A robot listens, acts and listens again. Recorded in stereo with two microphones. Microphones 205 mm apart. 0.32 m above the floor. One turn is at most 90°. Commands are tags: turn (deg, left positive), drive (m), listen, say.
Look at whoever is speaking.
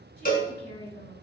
<turn deg="55"/>
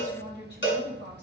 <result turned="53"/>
<turn deg="60"/>
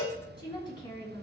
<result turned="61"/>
<turn deg="25"/>
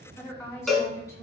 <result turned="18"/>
<turn deg="15"/>
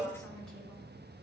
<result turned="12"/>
<listen/>
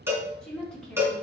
<say>Found it: a woman speaking, straight ahead, 2 to 4 m away.</say>